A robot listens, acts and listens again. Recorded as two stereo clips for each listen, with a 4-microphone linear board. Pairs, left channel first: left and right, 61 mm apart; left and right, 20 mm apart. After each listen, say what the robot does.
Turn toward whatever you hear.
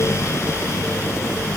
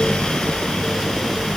Keep listening.
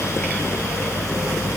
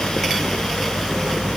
Keep listening.
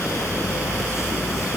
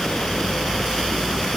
I can't make out anything.